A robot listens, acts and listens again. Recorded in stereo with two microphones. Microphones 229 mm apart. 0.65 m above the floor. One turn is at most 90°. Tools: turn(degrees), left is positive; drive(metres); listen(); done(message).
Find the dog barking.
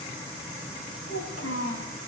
listen()
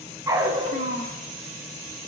turn(degrees=-20)
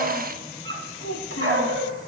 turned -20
turn(degrees=-90)
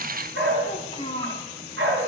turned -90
turn(degrees=-65)
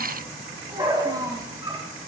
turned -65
turn(degrees=-20)
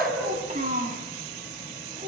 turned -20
done("Facing the dog barking.")